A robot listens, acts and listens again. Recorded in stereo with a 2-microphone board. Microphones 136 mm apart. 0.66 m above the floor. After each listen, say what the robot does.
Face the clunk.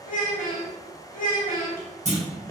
Turn 55° right.
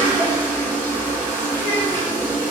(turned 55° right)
Keep listening.
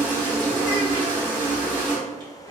I heard a clunk, but can't make it out now. It was about straight ahead or 70° right.